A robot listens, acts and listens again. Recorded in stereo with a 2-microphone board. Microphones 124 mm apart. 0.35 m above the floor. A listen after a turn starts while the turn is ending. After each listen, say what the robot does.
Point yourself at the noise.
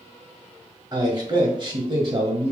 Turn 40° right.
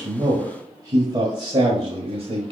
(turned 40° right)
Turn 45° right.
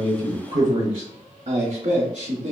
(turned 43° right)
Turn 50° right.
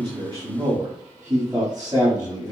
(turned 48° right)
Turn 15° right.
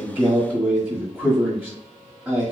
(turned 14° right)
Found it: a man speaking, straight ahead.